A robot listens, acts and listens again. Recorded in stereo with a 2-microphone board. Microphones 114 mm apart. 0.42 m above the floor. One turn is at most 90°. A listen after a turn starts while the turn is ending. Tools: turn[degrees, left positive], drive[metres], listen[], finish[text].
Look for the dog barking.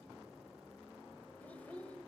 Action: listen[]
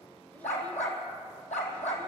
Action: turn[90]
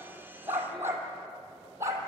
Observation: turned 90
Thought: So it is at 25° right.
Action: turn[-25]
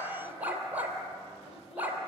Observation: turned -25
Thought: The dog barking is now 15° right.
Action: turn[-15]
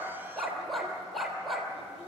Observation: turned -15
Action: finish[Found it: a dog barking, straight ahead.]